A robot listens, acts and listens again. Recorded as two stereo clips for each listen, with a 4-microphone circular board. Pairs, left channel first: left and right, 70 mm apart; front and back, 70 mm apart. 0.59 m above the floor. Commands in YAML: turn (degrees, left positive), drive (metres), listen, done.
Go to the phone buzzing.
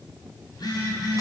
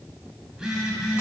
turn: 100
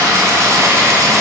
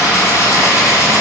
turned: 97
listen: true
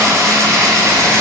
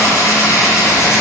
listen: true
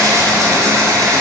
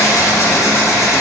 done: "I heard a phone buzzing from this way, but can't make it out now. I did not reach it."